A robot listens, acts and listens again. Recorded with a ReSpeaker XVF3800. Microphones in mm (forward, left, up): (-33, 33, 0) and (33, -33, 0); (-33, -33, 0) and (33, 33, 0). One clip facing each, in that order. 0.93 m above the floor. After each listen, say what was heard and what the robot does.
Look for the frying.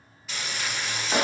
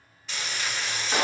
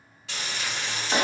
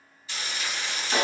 The frying: 135° right. Turn 135° right.
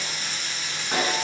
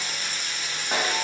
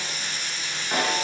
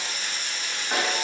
Facing the frying.